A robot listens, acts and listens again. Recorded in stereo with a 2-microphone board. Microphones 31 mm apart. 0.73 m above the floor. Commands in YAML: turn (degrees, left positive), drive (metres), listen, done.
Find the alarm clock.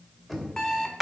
turn: 20
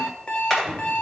turn: 135
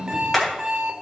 turn: -25
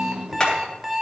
done: "Facing the alarm clock, 1 to 2 m away."